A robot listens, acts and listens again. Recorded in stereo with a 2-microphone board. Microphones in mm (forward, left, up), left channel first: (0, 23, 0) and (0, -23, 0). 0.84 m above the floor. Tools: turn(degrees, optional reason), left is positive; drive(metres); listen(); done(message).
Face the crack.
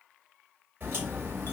turn(degrees=-45, reason="The crack: about 45° right or 135° right.")
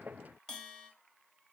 listen()
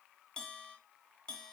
done("I heard a crack, but can't make it out now. It was about straight ahead or 90° right.")